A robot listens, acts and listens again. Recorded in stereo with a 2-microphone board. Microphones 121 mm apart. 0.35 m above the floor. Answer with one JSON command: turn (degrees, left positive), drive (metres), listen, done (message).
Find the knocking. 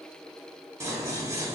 {"listen": true}
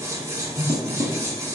{"listen": true}
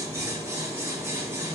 {"done": "I can't make out knocking to turn to."}